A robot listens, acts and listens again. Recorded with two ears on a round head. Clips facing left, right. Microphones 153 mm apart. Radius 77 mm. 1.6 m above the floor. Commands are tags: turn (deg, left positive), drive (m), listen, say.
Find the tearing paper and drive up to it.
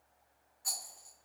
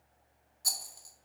<listen/>
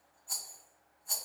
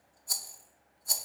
<listen/>
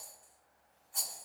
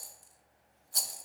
<say>I can't make out tearing paper to turn to.</say>